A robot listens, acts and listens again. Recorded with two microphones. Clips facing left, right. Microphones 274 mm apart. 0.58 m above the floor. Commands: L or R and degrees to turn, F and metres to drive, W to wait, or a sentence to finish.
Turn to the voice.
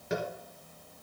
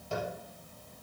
W
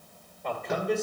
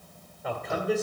R30
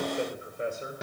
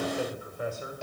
L25
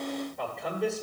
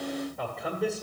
Found it: a man speaking, straight ahead.